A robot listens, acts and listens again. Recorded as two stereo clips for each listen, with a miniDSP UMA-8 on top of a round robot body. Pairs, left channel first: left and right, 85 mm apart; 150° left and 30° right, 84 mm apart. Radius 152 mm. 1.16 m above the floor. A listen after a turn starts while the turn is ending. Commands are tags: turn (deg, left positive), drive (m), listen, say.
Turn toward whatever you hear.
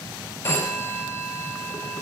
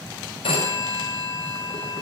<turn deg="150"/>
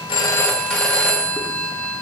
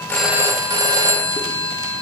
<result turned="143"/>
<turn deg="10"/>
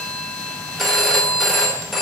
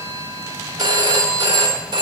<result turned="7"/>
<say>Facing the phone ringing.</say>